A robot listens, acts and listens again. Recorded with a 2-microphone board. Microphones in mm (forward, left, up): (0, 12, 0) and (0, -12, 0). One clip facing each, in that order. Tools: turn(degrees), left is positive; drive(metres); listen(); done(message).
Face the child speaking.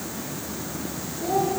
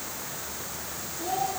turn(degrees=-30)
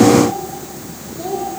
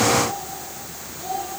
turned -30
done("Facing the child speaking, over 4 m away.")